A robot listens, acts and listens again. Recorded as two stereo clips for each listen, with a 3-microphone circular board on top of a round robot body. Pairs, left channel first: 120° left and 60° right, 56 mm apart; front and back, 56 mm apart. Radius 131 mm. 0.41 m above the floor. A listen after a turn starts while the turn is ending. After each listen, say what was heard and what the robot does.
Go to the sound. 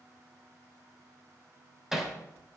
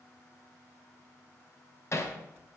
The hammering: 25° left. Turn 25° left.
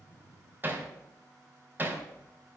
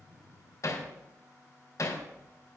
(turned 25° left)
The hammering is now 10° right. Turn 10° right.
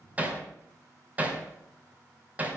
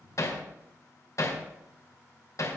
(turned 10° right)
Drive 1.0 m forward.
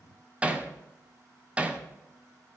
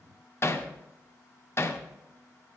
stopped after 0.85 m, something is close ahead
I am next to the hammering.